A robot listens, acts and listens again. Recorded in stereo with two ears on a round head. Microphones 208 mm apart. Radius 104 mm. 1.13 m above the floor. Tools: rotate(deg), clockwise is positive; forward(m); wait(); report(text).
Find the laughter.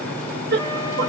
rotate(50)
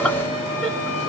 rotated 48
report("Found it: laughter, straight ahead.")